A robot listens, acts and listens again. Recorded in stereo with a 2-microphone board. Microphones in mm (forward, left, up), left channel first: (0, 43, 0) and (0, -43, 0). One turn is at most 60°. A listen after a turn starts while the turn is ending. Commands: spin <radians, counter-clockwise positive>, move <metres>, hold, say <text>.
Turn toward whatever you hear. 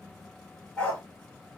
spin 0.52
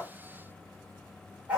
spin -0.35
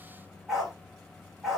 say Facing the dog barking, 2 to 4 m away.